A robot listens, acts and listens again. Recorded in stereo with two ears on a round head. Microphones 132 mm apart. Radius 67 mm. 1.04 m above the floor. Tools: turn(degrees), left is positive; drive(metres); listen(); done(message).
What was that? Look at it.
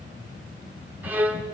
turn(degrees=-30)
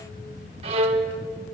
turn(degrees=-135)
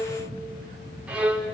turn(degrees=-10)
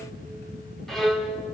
done("Found it: a violin, straight ahead, 2 to 4 m away.")